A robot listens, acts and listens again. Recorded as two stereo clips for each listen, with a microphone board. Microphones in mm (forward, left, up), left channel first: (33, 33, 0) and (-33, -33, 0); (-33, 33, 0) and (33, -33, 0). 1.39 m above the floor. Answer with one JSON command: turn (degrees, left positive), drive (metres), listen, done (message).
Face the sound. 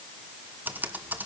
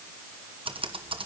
{"turn": -65}
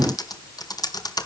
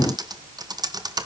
{"done": "Found it: typing on a keyboard, straight ahead."}